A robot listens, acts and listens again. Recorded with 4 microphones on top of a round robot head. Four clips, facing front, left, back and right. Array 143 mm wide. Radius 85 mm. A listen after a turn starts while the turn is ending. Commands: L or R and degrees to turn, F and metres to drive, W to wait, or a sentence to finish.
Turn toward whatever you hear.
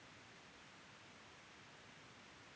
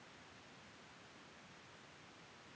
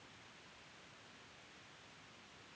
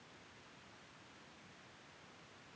W
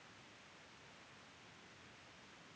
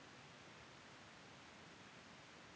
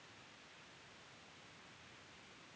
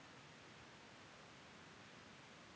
W
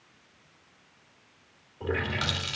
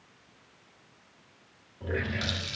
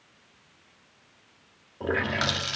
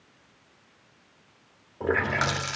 R115
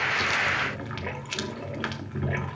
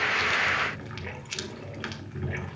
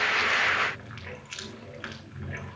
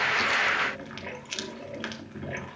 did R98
R20
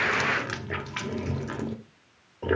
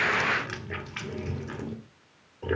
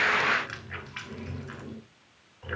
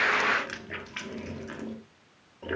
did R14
Facing the running tap.